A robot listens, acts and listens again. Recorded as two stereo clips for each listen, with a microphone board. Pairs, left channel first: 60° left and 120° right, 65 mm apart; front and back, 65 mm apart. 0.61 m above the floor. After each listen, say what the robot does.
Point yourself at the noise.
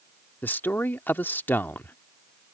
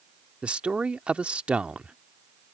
Turn 110° left.
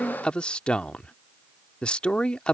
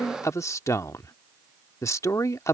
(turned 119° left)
Turn 10° right.
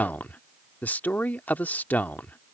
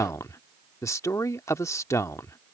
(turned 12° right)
Found it: a man speaking, straight ahead.